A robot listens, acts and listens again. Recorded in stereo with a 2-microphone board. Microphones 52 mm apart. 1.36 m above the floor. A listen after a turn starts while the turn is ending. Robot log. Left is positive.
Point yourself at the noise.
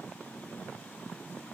cmd idle
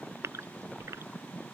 note: The gasp: about 65° right or 115° right.
cmd yaw -65
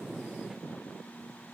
cmd idle
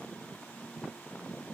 end: I heard a gasp, but can't make it out now. It was about straight ahead or 50° right.